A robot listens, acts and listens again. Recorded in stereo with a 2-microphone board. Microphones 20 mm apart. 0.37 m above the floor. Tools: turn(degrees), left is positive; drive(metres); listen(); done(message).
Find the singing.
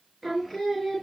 turn(degrees=30)
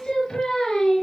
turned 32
turn(degrees=145)
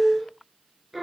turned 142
done("Found it: singing, straight ahead, 2 to 4 m away.")